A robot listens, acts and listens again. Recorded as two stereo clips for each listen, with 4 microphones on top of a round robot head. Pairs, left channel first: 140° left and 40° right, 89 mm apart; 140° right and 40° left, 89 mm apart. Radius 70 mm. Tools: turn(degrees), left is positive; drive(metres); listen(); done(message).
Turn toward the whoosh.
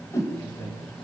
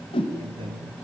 turn(degrees=-165)
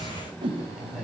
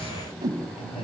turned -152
turn(degrees=-10)
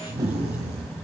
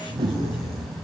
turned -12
done("Facing the whoosh, 2 to 4 m away.")